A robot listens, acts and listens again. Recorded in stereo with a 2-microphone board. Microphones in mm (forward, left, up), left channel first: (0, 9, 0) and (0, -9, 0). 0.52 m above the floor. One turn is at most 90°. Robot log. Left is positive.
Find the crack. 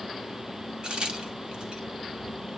note: The crack: about 60° right or 120° right.
cmd yaw -60
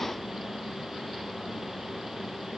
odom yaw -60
cmd idle
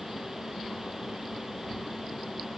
end: I heard a crack, but can't make it out now. It was about straight ahead or 60° right.